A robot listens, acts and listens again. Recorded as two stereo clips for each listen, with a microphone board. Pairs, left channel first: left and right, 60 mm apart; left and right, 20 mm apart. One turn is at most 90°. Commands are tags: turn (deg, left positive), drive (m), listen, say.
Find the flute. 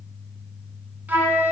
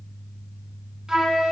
<turn deg="-30"/>
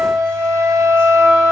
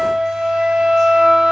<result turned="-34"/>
<turn deg="-90"/>
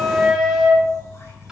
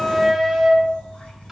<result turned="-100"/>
<turn deg="-10"/>
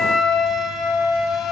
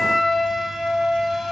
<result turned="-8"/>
<say>Found it: a flute, straight ahead, 1 to 2 m away.</say>